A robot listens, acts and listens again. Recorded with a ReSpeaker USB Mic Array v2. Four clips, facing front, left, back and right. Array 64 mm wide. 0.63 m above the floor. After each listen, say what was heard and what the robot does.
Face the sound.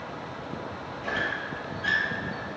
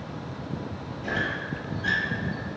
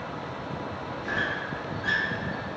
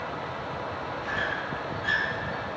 The squeak: 15° left. Turn 15° left.
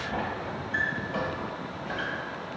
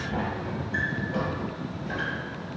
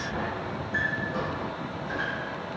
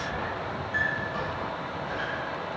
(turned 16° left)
Facing the squeak, 1 to 2 m away.